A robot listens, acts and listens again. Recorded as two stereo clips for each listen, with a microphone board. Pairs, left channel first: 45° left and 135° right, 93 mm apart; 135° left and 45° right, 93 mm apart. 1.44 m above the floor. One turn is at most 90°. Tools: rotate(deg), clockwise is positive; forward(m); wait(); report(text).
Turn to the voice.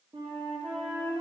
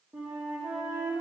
wait()
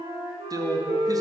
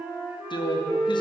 rotate(-90)
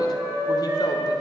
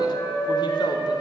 rotate(-85)
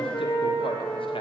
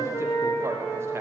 wait()
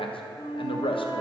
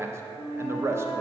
rotate(-20)
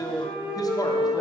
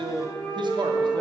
report("Found it: a man speaking, straight ahead.")